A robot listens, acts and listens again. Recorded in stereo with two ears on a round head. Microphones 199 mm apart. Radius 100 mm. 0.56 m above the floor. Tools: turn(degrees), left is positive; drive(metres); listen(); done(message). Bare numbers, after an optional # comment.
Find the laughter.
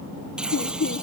# The laughter: about 60° left or 120° left.
turn(60)
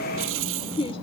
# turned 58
# So it is at 30° left.
turn(30)
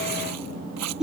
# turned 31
done("Found it: laughter, straight ahead.")